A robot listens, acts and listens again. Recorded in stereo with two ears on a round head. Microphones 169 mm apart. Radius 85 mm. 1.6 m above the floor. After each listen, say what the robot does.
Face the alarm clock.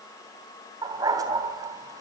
Keep listening.
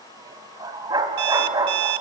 Turn 60° right.
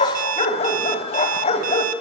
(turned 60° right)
Turn 45° right.
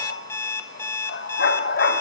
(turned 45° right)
Turn 15° left.
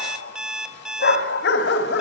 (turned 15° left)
Found it: an alarm clock, straight ahead, 1 to 2 m away.